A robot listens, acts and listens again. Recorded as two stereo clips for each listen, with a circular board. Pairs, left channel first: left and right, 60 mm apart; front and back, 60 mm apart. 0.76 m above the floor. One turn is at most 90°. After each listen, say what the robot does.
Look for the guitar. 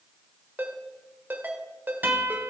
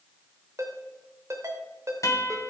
Turn 30° right.
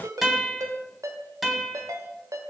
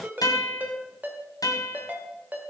Facing the guitar.